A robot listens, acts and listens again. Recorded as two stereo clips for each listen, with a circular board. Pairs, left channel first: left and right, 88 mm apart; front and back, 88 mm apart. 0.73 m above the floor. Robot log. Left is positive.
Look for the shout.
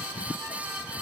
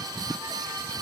cmd idle
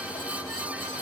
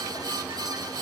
cmd idle
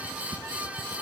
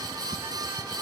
end: I can't make out a shout to turn to.